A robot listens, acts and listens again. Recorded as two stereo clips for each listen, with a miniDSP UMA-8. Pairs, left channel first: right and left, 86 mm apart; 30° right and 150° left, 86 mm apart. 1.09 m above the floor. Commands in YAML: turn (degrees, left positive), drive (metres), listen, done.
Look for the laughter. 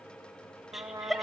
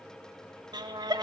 turn: 175
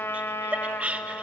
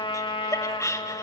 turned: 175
turn: 15
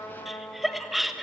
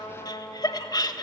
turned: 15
done: "Found it: laughter, straight ahead, 1 to 2 m away."